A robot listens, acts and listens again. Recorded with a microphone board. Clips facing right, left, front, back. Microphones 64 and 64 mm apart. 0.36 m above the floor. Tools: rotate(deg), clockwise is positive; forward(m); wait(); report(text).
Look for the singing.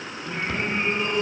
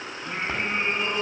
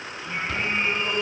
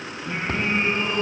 rotate(-105)
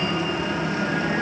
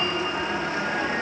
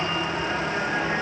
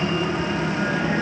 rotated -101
wait()
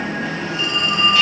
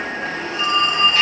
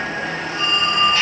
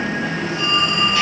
wait()
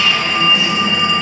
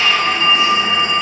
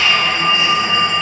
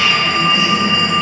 report("I heard singing from this way, but can't make it out now.")